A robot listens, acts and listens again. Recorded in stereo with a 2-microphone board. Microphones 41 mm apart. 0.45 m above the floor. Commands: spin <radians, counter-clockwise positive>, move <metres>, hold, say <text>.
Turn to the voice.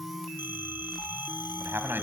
spin -1.05
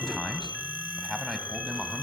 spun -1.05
say Found it: a man speaking, straight ahead.